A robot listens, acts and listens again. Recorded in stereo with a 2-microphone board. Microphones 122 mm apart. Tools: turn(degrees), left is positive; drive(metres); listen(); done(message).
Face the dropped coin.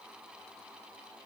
listen()
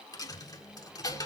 turn(degrees=30)
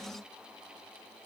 listen()
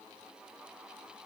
done("I heard a dropped coin, but can't make it out now. It was about straight ahead or 120° left.")